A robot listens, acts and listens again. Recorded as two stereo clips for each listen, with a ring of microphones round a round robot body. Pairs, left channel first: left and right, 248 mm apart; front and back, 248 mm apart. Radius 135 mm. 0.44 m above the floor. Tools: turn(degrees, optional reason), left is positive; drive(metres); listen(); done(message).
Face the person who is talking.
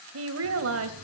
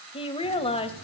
turn(degrees=-65, reason="The woman speaking: 65° right.")
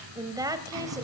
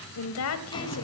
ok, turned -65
turn(degrees=-15, reason="The woman speaking is now 15° right.")
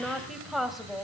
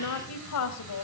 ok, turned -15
done("Found it: a woman speaking, straight ahead.")